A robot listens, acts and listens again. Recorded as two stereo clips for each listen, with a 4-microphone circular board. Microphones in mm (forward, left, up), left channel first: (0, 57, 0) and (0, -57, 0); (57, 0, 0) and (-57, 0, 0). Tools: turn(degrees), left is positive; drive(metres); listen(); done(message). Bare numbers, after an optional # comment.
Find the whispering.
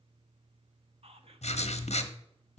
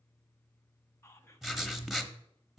# The whispering: 65° right.
turn(-65)
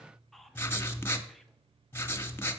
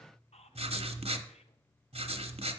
done("Facing the whispering, 1 to 2 m away.")